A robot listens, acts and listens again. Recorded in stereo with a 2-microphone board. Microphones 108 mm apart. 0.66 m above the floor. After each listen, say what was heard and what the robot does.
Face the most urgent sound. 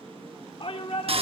The shout: about 55° left or 125° left. Turn 55° left.
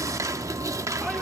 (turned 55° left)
Keep listening.
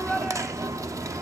Facing the shout, 1 to 2 m away.